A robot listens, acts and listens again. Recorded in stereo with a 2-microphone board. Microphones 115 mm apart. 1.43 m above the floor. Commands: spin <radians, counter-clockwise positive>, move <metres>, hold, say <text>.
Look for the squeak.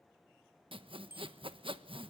hold
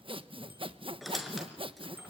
spin 0.52
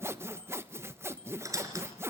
spin -0.52
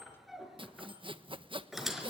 say Found it: a squeak, straight ahead.